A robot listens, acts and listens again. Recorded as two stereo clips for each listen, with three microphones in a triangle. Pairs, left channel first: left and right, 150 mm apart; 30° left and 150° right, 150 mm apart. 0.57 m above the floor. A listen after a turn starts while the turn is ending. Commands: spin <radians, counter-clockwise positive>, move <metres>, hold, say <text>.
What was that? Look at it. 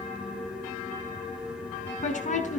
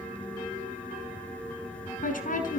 spin 0.96
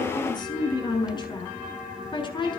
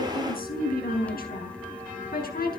spin 0.52
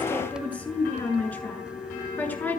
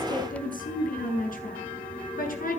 spin 0.17
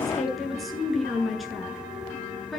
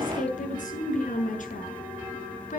say Facing the woman speaking, over 4 m away.